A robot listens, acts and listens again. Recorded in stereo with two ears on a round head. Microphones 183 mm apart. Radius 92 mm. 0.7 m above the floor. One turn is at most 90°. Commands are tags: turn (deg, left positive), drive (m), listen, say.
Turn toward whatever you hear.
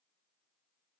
<listen/>
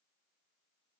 <listen/>
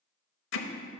<turn deg="65"/>
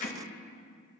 <turn deg="40"/>
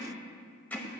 <turn deg="10"/>
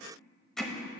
<say>Facing the hammering, under 1 m away.</say>